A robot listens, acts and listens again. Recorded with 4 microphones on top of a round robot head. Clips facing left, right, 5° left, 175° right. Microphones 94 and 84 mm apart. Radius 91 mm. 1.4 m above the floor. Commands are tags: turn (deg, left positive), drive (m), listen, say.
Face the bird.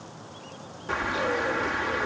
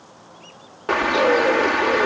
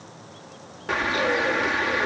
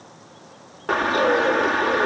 <turn deg="-120"/>
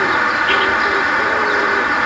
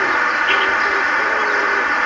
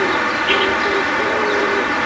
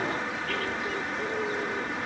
<say>Facing the bird.</say>